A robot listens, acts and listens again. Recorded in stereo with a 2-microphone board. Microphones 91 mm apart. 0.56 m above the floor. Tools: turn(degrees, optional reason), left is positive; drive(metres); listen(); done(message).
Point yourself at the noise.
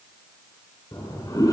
turn(degrees=40, reason="The toilet flushing: about 40° left or 140° left.")
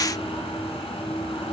turn(degrees=100, reason="So it is at 100° left.")
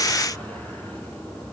turn(degrees=15, reason="The toilet flushing is now 15° left.")
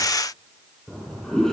done("Facing the toilet flushing, over 4 m away.")